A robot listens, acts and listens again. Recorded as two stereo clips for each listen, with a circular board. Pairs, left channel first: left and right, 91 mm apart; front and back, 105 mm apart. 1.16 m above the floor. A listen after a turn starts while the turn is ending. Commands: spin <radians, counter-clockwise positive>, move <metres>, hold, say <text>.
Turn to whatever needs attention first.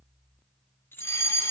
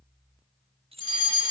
spin 0.52
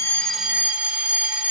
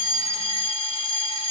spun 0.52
spin -0.26
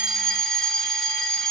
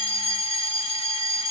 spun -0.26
say Found it: a fire alarm, straight ahead, 2 to 4 m away.